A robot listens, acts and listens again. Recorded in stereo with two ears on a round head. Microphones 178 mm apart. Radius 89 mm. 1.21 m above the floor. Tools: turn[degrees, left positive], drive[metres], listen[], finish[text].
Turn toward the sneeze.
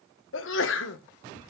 Thought: The sneeze: about 65° left or 115° left.
Action: turn[65]
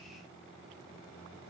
Action: listen[]
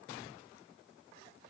Action: finish[I heard a sneeze, but can't make it out now. It was about straight ahead or 50° left.]